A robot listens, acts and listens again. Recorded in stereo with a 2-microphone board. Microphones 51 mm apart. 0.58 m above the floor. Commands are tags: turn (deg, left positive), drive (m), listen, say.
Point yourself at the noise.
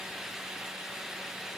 <listen/>
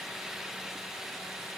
<listen/>
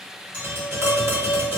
<turn deg="-50"/>
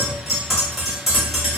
<say>Facing the tapping, 1 to 2 m away.</say>